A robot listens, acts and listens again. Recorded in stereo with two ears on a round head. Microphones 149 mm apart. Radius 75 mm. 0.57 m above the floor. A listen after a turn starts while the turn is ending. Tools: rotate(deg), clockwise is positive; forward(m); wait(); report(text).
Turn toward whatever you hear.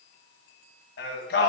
rotate(-70)
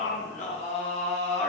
rotate(-40)
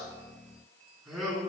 report("Facing the singing, 2 to 4 m away.")